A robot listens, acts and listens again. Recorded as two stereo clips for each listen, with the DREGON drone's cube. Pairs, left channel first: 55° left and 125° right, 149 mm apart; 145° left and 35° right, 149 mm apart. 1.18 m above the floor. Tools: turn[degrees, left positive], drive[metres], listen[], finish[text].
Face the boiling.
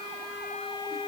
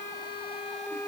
Action: listen[]
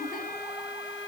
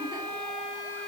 Action: listen[]
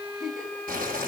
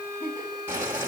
Thought: The boiling: 110° right.
Action: turn[-110]
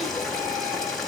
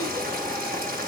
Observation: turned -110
Thought: The boiling is now 30° right.
Action: turn[-30]
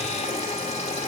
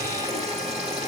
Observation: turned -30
Thought: The boiling is now 10° left.
Action: turn[10]
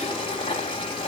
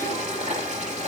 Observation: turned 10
Action: finish[Found it: boiling, straight ahead, 2 to 4 m away.]